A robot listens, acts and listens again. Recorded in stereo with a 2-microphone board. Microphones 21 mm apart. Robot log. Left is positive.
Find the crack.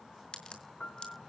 note: The crack: about 50° left or 130° left.
cmd yaw +50
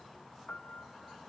cmd idle
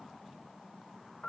end: I heard a crack, but can't make it out now. It was about straight ahead or 80° left.